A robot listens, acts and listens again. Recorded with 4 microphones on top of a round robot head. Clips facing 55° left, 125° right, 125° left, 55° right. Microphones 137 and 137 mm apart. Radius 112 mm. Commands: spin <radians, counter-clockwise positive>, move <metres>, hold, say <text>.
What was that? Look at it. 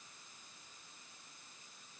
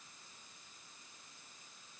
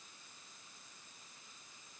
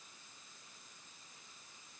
hold
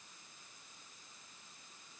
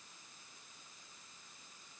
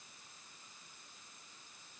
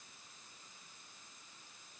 hold
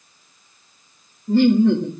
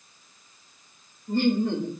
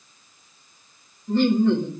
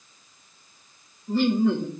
spin 0.52
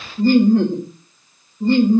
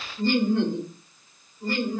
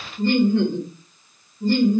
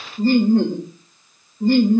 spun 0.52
spin -0.26
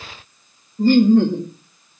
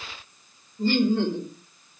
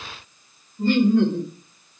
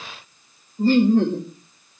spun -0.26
say Facing the laughter, 1 to 2 m away.